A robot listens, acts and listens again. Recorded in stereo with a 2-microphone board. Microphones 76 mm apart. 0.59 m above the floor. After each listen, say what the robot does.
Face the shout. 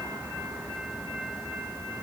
Keep listening.
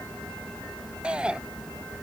Turn 30° right.
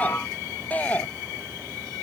Turn 20° left.
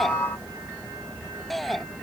Found it: a shout, straight ahead.